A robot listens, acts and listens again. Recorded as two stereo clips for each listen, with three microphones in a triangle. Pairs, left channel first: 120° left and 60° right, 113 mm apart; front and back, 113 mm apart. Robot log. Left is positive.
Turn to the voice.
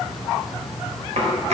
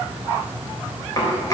cmd idle
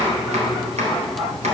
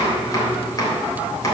cmd idle
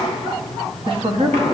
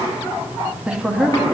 note: The woman speaking: 100° right.
cmd yaw -100
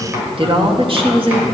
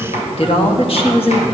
note: The woman speaking is now 25° right.
cmd yaw -25
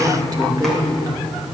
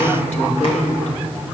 end: Found it: a woman speaking, straight ahead.